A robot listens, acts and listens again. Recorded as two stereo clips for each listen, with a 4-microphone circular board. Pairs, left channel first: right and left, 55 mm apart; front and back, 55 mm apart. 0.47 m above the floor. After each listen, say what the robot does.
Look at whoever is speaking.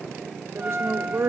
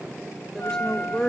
Turn 75° left.
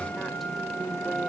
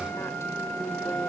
Keep listening.
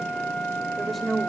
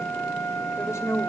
Facing the woman speaking, 2 to 4 m away.